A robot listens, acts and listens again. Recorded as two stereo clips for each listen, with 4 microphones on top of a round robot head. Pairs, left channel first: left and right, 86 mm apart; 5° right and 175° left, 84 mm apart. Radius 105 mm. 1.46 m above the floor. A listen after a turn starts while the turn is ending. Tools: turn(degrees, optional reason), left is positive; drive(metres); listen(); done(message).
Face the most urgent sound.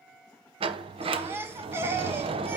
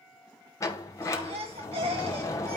turn(degrees=-150, reason="The baby crying: 150° right.")
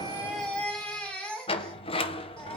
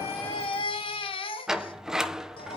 turn(degrees=10, reason="The baby crying is now 10° left.")
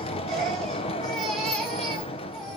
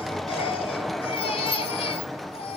done("Found it: a baby crying, straight ahead.")